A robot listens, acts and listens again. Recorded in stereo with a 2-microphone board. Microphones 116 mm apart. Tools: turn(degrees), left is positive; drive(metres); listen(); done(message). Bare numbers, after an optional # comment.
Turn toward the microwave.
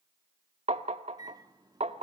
# The microwave: about 35° right or 145° right.
turn(-35)
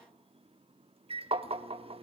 # So it is at 105° right.
turn(-105)
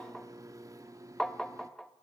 # The microwave is now 35° right.
turn(-35)
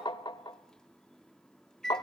done("Found it: a microwave, straight ahead.")